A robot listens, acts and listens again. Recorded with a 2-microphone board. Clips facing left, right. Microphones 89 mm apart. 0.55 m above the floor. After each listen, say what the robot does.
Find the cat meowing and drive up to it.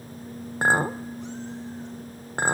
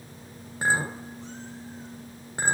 Keep listening.
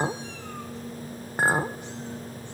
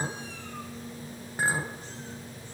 Keep listening.
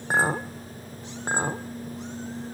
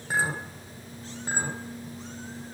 I can't make out a cat meowing to turn to.